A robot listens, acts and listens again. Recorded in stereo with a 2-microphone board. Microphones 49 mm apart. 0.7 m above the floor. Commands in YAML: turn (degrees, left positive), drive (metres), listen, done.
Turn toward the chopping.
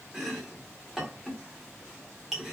turn: -30
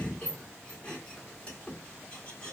turn: 25
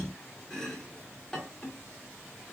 turn: 10
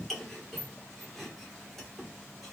done: "Found it: chopping, straight ahead, 1 to 2 m away."